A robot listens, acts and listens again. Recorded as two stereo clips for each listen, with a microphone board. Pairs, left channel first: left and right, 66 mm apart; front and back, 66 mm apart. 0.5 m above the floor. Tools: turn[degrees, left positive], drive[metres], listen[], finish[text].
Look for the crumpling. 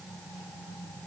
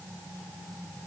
Action: listen[]
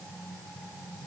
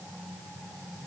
Action: listen[]
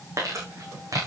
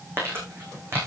Thought: The crumpling: 125° right.
Action: turn[-125]
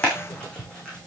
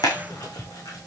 Thought: The crumpling is now 15° left.
Action: turn[15]
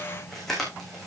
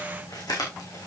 Action: finish[Found it: crumpling, straight ahead, over 4 m away.]